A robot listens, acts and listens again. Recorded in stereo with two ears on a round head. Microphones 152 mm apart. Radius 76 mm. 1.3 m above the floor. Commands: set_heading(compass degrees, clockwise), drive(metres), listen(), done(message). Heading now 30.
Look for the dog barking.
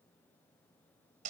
listen()
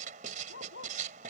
set_heading(320)
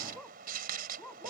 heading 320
done("Found it: a dog barking, straight ahead.")